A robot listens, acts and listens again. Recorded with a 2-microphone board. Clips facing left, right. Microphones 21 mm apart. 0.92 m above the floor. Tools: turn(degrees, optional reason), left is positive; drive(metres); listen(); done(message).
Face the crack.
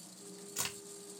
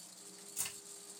turn(degrees=75, reason="The crack: about 75° left or 105° left.")
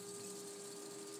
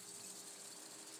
listen()
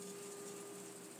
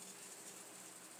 done("I heard a crack, but can't make it out now. It was about straight ahead or 30° left.")